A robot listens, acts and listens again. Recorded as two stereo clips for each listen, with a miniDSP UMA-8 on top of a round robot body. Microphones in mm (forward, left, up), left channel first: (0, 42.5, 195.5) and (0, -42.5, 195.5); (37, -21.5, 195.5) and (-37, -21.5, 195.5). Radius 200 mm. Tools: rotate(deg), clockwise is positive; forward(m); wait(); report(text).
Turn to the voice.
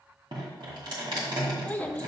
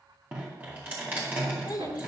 rotate(-20)
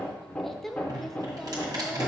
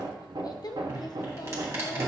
report("Found it: a child speaking, straight ahead.")